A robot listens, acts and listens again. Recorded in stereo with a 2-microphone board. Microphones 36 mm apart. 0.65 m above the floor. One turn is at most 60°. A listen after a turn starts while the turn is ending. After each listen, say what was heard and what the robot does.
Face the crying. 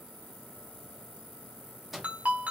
Keep listening.
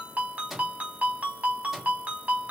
Keep listening.
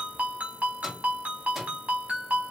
I can't make out crying to turn to.